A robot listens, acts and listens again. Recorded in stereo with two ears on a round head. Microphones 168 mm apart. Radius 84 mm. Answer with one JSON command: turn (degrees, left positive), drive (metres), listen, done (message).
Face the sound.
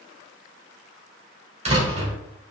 {"turn": -35}
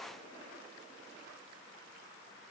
{"listen": true}
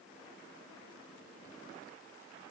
{"done": "I heard a door slam, but can't make it out now. It was about straight ahead or 110° right."}